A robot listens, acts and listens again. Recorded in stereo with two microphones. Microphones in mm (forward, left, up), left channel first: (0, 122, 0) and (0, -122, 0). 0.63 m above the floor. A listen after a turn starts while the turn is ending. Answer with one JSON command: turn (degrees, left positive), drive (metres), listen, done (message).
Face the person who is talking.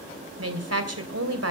{"turn": -70}
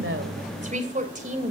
{"turn": -30}
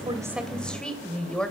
{"done": "Facing the woman speaking."}